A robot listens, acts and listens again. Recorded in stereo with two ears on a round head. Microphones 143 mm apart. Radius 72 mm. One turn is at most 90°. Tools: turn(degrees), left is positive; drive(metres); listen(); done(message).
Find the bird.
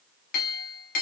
listen()
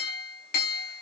listen()
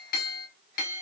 done("I can't make out a bird, only a clink.")